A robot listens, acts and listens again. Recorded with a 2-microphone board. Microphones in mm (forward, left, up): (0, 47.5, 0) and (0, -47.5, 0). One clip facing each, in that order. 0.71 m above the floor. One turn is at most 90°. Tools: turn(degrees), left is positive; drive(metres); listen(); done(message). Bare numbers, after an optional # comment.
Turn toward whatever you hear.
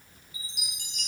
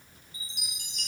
# The chime: about 45° right or 135° right.
turn(-45)
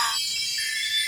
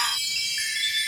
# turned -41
# So it is at 85° right.
turn(-85)
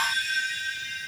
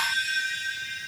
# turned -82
done("Found it: a chime, straight ahead.")